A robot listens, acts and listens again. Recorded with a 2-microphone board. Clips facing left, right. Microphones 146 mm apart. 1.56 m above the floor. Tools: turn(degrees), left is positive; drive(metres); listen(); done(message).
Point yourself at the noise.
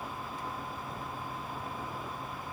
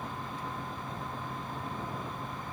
listen()
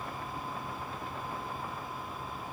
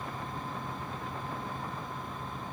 listen()
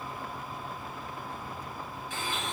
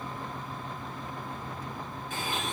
turn(degrees=-55)
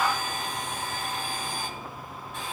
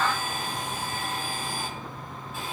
done("Found it: a blender, straight ahead, 2 to 4 m away.")